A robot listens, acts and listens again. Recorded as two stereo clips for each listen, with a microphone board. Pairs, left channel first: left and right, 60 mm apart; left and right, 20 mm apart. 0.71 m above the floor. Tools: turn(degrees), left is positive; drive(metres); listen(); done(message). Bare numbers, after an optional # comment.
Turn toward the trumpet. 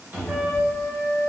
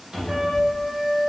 turn(-90)
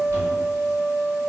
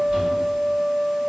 done("Facing the trumpet, 1 to 2 m away.")